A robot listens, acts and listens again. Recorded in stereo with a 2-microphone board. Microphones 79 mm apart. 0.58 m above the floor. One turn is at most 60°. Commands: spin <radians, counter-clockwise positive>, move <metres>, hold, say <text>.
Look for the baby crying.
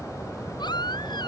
spin 1.05
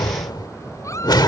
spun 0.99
spin 0.79
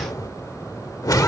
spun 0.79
hold
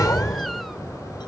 hold
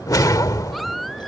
say Found it: a baby crying, straight ahead.